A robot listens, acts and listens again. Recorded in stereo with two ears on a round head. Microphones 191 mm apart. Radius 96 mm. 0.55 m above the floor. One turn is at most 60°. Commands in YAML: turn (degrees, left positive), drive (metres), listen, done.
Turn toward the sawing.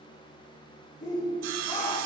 turn: -60
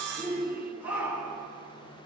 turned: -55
turn: -50
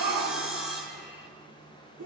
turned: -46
done: "Found it: sawing, straight ahead."